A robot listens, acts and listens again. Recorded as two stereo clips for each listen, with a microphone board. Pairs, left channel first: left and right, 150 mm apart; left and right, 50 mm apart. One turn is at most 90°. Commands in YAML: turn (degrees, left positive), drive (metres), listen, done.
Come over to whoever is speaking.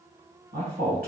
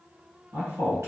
turn: -90
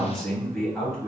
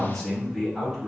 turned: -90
drive: 1.0
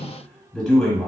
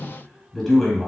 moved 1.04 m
drive: 1.0
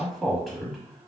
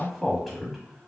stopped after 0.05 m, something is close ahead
done: "I am next to the man speaking."